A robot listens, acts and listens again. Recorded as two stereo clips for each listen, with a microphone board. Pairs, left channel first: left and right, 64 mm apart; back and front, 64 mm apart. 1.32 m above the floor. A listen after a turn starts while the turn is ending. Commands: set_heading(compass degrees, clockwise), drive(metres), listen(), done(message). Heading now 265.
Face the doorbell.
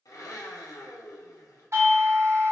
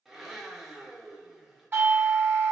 set_heading(320)
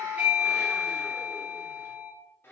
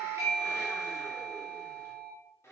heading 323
done("Found it: a doorbell, straight ahead.")